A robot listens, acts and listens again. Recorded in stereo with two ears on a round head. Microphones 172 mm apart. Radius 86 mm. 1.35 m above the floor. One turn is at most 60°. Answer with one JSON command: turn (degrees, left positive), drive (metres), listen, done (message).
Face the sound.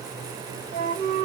{"turn": -35}
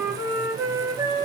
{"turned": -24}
{"turn": -20}
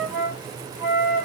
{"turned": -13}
{"done": "Found it: a flute, straight ahead."}